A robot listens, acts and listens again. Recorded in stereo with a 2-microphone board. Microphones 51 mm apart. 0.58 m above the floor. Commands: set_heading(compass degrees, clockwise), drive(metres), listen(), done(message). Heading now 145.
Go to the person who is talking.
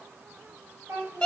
set_heading(220)
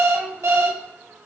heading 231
listen()
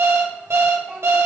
listen()
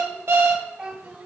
set_heading(246)
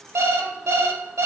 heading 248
listen()
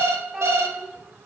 drive(1.0)
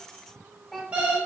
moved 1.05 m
drive(1.0)
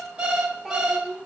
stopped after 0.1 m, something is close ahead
done("I am next to the child speaking.")